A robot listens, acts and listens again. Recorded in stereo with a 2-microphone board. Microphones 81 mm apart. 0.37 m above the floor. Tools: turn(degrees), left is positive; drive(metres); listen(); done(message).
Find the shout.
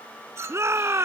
turn(degrees=-35)
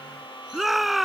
done("Found it: a shout, straight ahead.")